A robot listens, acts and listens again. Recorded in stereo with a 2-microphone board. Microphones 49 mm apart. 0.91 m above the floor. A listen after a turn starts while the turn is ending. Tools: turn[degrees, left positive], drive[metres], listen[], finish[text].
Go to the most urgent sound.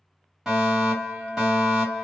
Action: turn[-30]
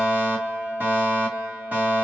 Thought: So it is at 145° right.
Action: turn[-145]
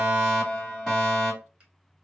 Action: drive[1.0]
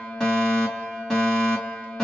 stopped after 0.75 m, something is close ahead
Thought: The fire alarm is now 15° left.
Action: turn[15]
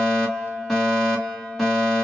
Action: finish[Arrived at the fire alarm, straight ahead.]